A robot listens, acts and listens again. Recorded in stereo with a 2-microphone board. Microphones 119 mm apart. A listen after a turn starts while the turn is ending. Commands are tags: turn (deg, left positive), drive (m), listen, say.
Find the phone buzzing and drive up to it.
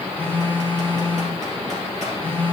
<turn deg="15"/>
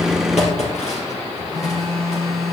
<drive m="1.0"/>
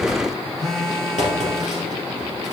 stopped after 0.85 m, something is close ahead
<say>I am next to the phone buzzing.</say>